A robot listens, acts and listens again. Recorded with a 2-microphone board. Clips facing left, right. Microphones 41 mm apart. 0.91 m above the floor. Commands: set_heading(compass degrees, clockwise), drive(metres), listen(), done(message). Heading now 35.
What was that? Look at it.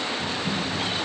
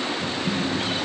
set_heading(15)
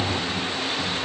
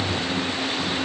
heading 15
set_heading(235)
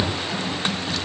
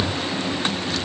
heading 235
set_heading(185)
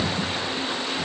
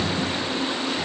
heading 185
done("Found it: typing on a keyboard, straight ahead, 1 to 2 m away.")